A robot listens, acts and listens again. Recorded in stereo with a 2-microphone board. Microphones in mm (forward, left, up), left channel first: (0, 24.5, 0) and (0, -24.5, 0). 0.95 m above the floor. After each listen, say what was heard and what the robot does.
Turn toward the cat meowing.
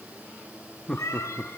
Turn 90° left.
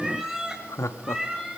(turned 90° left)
So it is at 15° right. Turn 15° right.
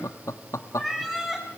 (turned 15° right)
Found it: a cat meowing, straight ahead.